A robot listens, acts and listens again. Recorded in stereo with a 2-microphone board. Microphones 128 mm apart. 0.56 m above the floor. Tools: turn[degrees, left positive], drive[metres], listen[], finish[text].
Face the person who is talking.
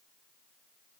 Action: listen[]
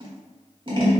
Action: listen[]
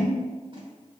Action: finish[I can't make out anyone speaking, only scissors.]